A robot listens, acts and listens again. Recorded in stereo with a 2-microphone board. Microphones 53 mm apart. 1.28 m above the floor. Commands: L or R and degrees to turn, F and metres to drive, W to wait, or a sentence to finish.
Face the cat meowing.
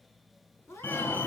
L65
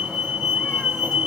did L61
W
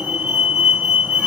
W
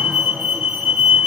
I heard a cat meowing, but can't make it out now. It was about straight ahead or 55° left.